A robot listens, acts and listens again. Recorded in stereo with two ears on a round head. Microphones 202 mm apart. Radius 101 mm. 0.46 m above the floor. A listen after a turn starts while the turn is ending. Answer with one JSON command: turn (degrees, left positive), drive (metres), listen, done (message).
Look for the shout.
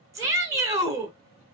{"turn": -30}
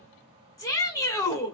{"turn": 15}
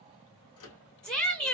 {"done": "Found it: a shout, straight ahead, 1 to 2 m away."}